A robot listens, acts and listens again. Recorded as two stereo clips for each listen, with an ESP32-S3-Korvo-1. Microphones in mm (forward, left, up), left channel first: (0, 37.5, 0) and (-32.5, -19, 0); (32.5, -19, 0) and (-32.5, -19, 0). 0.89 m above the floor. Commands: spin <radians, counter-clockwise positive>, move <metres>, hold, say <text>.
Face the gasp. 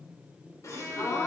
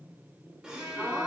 spin 1.75
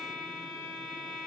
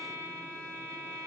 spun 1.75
say Facing where the gasp came from. I can't hear it now.